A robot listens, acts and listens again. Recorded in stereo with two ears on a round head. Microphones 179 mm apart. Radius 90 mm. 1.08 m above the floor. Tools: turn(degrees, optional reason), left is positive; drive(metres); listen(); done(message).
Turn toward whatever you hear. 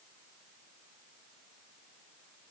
listen()
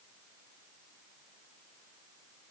listen()
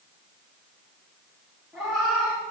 turn(degrees=30)
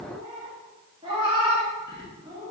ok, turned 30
turn(degrees=-25, reason="So it is at 25° right.")
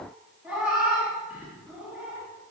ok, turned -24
done("Found it: a cat meowing, straight ahead, under 1 m away.")